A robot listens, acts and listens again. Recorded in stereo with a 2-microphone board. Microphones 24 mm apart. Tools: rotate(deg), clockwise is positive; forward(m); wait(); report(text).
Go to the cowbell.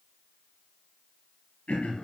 wait()
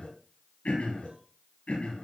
wait()
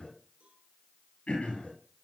report("I can't make out a cowbell, only throat clearing.")